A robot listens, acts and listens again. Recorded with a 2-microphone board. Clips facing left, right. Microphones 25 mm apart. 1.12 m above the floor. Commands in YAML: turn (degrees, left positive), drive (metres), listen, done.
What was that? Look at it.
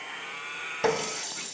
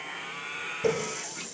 turn: 90
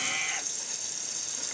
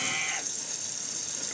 listen: true
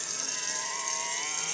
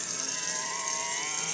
listen: true
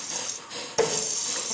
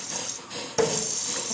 done: "Found it: a running tap, straight ahead."